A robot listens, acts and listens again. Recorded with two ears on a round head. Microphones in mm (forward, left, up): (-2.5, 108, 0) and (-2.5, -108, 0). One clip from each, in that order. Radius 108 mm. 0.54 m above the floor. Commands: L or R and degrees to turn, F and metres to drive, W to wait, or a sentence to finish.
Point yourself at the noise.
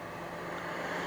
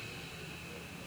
W
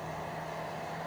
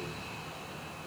W
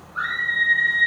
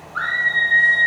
R35
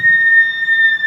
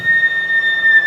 R110
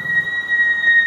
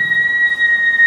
R15
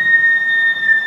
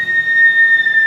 Found it: a scream, straight ahead, 2 to 4 m away.